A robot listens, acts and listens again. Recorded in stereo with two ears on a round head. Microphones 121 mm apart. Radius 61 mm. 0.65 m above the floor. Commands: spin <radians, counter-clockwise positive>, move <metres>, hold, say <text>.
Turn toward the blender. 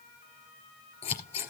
hold
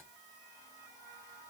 hold
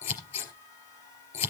say I can't make out a blender to turn to.